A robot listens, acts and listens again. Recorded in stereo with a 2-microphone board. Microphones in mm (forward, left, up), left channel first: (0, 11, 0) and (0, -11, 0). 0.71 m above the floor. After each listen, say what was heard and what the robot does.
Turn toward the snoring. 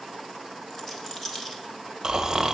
The snoring: about 25° right or 155° right. Turn 25° right.
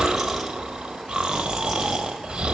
So it is at 130° right. Turn 130° right.
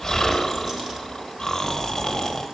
The snoring is now 20° left. Turn 20° left.
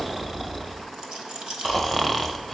Found it: snoring, straight ahead, under 1 m away.